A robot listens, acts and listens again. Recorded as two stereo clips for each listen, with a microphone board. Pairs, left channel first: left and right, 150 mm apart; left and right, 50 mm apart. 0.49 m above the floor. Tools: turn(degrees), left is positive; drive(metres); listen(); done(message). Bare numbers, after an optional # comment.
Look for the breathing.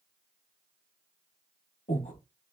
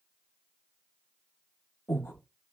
# The breathing: about 55° left or 125° left.
turn(55)
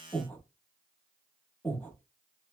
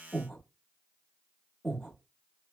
# So it is at 10° left.
turn(10)
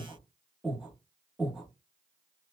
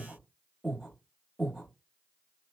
done("Found it: breathing, straight ahead.")